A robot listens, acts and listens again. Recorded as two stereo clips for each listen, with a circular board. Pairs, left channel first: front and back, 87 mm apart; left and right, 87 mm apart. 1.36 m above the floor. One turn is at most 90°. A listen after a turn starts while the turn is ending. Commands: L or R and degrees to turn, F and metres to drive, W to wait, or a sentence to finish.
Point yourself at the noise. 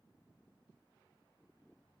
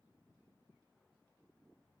W
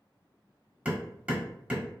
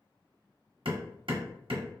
R90
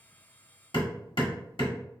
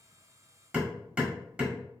R15
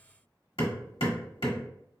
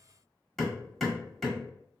Found it: hammering, straight ahead.